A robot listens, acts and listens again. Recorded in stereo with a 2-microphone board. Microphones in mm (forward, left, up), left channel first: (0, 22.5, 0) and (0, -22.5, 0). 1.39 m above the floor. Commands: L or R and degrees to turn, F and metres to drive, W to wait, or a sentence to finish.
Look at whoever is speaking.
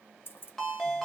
W
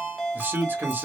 R40
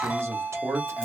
R100
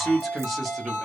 Found it: a man speaking, straight ahead.